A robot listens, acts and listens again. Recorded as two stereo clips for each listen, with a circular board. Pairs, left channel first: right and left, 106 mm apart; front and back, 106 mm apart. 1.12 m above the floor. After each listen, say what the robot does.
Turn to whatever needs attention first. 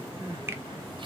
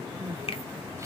Turn 120° left.
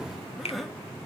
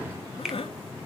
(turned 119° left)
Found it: crying, straight ahead, under 1 m away.